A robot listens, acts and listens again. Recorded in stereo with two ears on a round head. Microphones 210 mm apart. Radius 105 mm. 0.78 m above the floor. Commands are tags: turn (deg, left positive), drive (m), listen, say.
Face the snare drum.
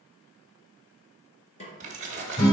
<turn deg="30"/>
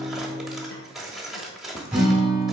<listen/>
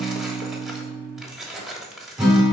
<listen/>
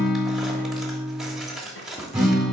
<say>I heard a snare drum, but can't make it out now. It was about straight ahead or 120° left.</say>